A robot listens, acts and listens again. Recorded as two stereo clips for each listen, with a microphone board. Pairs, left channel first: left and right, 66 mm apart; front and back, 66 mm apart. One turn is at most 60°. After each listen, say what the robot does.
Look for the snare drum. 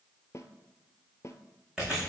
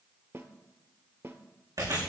Turn 60° left.
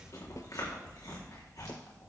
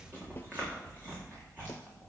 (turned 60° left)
Turn 60° left.
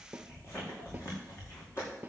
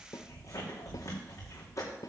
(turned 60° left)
Turn 20° right.
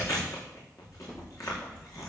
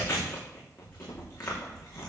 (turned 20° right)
Keep listening.
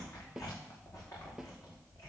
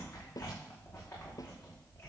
Found it: a snare drum, straight ahead, 1 to 2 m away.